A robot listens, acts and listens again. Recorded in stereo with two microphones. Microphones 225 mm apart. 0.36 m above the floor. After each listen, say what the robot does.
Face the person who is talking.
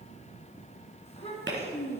Turn 30° left.
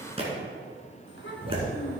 Turn 120° left.
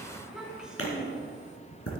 Facing the child speaking.